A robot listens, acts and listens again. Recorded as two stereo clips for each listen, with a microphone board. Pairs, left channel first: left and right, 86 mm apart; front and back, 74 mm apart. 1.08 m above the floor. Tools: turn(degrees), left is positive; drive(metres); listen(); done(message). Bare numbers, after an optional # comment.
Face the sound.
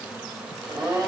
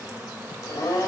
# The blender: 45° right.
turn(-45)
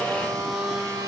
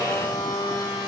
# The blender is now 35° right.
turn(-35)
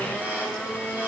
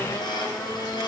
# The blender is now 15° right.
turn(-15)
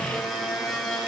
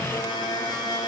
done("Found it: a blender, straight ahead, over 4 m away.")